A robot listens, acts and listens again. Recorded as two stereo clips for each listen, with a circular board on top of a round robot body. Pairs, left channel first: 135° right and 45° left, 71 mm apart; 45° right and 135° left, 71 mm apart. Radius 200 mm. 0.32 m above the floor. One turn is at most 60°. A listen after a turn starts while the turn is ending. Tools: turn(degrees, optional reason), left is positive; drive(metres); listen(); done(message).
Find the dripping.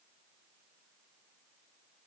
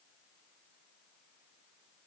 listen()
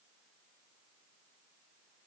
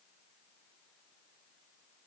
listen()
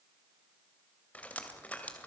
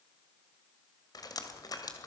turn(degrees=-60, reason="The dripping: 65° right.")
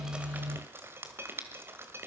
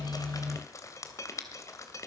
turn(degrees=-10, reason="The dripping is now 10° right.")
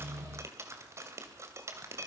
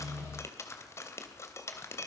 done("Facing the dripping.")